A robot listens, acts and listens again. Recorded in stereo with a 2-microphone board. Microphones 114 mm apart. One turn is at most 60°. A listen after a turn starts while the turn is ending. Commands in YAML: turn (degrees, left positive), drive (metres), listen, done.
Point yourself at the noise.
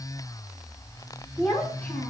turn: 30
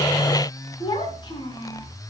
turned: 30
turn: 60
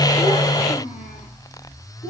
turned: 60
turn: 60
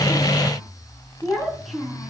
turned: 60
done: "Facing the child speaking."